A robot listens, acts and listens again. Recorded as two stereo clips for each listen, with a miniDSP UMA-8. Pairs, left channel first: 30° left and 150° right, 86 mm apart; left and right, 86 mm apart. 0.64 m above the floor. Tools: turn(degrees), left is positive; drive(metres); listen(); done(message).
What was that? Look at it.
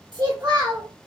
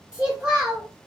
turn(degrees=-170)
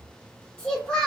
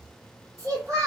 turn(degrees=-50)
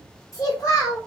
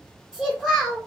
turn(degrees=-10)
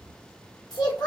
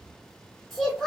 done("Found it: a child speaking, straight ahead.")